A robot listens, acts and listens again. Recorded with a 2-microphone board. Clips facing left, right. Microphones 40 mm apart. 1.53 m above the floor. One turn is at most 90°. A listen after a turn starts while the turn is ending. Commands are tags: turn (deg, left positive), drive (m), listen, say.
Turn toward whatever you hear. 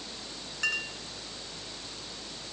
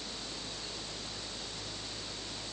<turn deg="90"/>
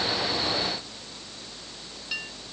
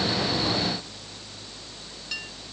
<turn deg="10"/>
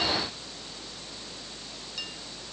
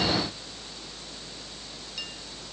<listen/>
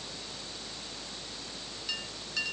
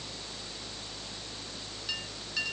<say>Facing the clink.</say>